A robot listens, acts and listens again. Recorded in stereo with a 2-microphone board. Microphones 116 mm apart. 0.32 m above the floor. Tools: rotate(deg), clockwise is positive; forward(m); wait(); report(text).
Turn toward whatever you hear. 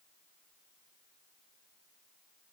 wait()
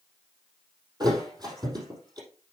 rotate(35)
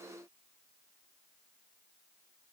wait()
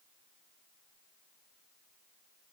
report("I heard a thud, but can't make it out now. It was about straight ahead or 110° right.")